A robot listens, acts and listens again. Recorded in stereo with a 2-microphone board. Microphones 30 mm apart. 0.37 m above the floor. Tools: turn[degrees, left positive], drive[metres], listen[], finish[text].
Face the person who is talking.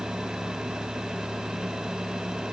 Action: listen[]
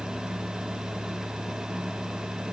Action: listen[]
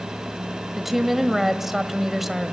Action: turn[-30]
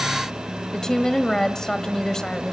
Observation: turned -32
Thought: So it is at 25° left.
Action: turn[25]
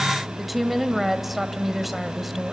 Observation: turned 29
Action: finish[Found it: a woman speaking, straight ahead, 1 to 2 m away.]